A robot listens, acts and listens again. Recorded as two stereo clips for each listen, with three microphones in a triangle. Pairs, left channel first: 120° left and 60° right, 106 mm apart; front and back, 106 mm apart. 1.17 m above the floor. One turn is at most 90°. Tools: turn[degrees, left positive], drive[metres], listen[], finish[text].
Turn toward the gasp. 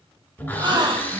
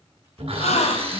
Thought: The gasp: 10° right.
Action: turn[-10]
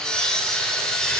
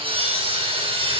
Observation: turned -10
Action: finish[I heard a gasp from this way, but can't make it out now.]